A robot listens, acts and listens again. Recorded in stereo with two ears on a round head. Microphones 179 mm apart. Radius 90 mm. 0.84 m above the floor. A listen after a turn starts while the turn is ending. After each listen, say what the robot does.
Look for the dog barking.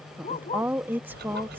Turn 30° left.
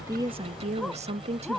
Facing the dog barking.